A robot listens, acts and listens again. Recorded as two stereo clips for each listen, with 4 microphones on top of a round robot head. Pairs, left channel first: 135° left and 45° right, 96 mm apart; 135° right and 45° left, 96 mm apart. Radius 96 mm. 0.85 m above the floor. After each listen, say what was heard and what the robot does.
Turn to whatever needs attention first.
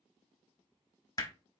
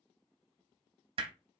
Keep listening.
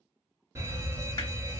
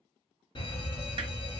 The fire alarm: 105° right. Turn 105° right.
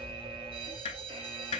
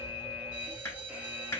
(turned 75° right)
The fire alarm is now 30° right. Turn 30° right.
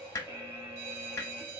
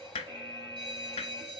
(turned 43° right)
The fire alarm is now 15° left. Turn 15° left.
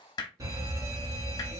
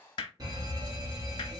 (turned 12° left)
Facing the fire alarm.